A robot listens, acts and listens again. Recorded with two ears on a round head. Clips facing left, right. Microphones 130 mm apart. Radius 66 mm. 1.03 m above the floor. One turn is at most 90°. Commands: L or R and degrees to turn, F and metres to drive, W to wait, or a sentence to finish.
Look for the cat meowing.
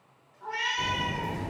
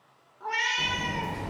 R65
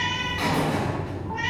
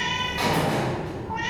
W
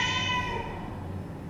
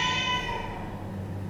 W
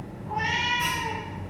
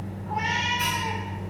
I heard a cat meowing, but can't make it out now. It was about straight ahead or 50° right.